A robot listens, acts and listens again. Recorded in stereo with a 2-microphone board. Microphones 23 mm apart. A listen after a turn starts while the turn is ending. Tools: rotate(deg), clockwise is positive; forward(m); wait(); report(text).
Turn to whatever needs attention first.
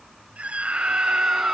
rotate(60)
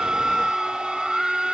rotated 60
report("Found it: a scream, straight ahead.")